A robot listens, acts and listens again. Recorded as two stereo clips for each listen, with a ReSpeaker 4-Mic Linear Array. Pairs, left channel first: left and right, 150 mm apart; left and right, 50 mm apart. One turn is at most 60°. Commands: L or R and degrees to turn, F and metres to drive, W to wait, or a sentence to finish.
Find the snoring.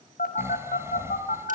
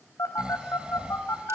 R15
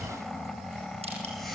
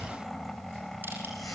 Facing the snoring, 1 to 2 m away.